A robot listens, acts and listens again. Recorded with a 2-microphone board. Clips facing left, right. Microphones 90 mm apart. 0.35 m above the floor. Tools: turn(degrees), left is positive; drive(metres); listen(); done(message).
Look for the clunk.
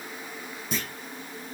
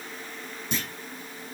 turn(degrees=30)
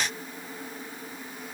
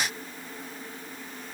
listen()
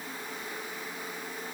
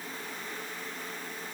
done("I heard a clunk, but can't make it out now. It was about 30° right or 150° left.")